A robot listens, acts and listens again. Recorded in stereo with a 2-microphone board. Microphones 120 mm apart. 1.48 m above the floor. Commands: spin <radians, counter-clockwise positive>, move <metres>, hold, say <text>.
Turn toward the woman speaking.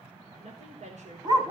spin -1.22
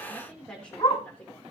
spin 0.17
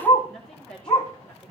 say Facing the woman speaking.